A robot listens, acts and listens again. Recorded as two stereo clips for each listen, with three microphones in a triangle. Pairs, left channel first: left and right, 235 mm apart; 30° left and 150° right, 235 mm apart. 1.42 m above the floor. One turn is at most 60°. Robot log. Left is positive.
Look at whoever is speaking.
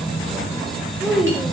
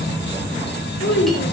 end: Found it: a child speaking, straight ahead, 2 to 4 m away.